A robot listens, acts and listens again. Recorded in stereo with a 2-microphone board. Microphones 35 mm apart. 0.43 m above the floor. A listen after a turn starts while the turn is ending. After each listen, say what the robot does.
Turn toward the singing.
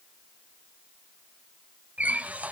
Keep listening.
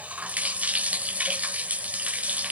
Keep listening.
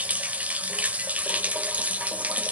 I can't make out singing, only a running tap.